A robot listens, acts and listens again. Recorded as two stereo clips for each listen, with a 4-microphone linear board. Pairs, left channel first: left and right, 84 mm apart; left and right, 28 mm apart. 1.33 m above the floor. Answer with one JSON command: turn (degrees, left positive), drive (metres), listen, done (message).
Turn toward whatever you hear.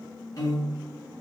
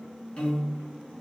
{"turn": 40}
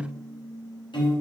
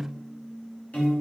{"turn": 95}
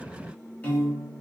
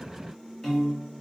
{"turn": 20}
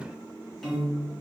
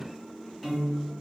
{"done": "Facing the piano, 1 to 2 m away."}